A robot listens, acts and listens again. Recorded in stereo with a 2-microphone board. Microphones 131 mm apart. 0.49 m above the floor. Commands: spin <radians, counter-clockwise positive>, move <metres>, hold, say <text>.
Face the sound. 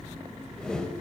spin 0.52
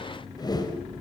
spin 2.53
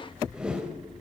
say Found it: a whoosh, straight ahead.